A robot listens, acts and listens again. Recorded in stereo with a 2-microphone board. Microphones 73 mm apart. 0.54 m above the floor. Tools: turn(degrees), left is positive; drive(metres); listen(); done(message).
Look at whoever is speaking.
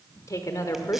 turn(degrees=50)
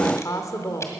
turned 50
turn(degrees=65)
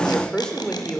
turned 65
turn(degrees=15)
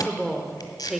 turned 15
done("Found it: a woman speaking, straight ahead.")